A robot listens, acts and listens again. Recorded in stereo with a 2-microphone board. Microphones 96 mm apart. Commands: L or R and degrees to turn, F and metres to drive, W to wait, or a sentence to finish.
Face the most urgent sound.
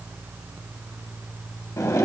W
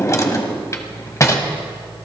W
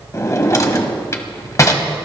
I can't make out anything urgent to turn to.